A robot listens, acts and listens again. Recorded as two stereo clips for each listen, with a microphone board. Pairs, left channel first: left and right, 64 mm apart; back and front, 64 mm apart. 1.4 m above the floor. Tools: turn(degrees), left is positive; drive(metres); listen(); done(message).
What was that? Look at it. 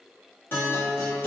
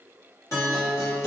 turn(degrees=145)
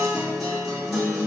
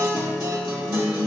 done("Facing the guitar, 1 to 2 m away.")